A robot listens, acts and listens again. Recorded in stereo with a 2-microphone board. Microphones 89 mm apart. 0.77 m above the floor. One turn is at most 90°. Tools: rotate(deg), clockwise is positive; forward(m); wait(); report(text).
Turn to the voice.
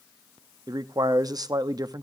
rotate(45)
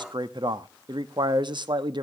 rotate(80)
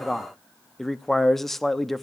report("Found it: a man speaking, straight ahead.")